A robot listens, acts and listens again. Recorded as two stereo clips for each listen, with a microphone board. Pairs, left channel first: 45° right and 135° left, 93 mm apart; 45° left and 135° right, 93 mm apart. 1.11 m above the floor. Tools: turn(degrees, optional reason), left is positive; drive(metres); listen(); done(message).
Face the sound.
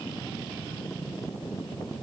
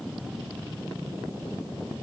listen()
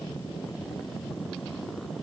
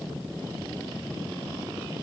listen()
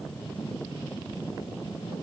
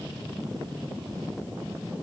done("I can't make out anything to turn to.")